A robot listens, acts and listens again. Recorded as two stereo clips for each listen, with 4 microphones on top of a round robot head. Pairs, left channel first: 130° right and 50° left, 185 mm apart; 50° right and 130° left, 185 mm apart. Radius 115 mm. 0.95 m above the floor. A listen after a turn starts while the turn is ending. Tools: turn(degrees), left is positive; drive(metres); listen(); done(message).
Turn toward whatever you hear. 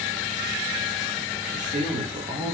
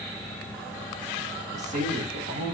turn(degrees=110)
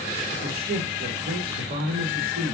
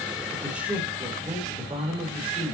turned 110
turn(degrees=75)
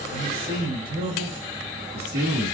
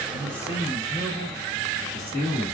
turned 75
turn(degrees=20)
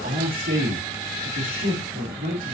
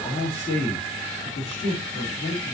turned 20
done("Facing the man speaking, 2 to 4 m away.")